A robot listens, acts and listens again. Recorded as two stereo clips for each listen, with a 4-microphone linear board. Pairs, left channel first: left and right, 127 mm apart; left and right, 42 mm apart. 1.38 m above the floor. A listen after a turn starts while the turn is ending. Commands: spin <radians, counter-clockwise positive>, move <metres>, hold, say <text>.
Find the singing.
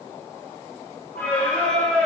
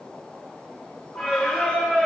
spin 0.52
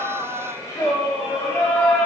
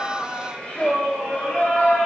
spin 0.26
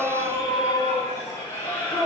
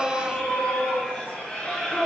spin 0.26
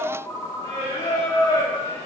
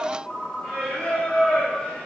spin 2.62
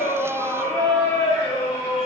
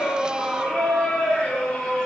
spin 0.44
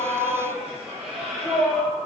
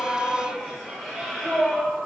say Facing the singing.